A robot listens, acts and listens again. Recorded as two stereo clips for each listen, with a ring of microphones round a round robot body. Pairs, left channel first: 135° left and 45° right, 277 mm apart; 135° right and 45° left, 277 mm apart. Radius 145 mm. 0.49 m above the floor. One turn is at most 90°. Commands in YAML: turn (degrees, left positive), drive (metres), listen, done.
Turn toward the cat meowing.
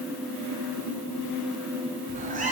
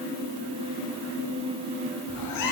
turn: -90
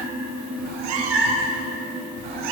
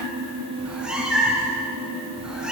turn: -40
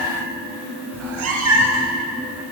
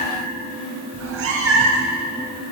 done: "Found it: a cat meowing, straight ahead, 1 to 2 m away."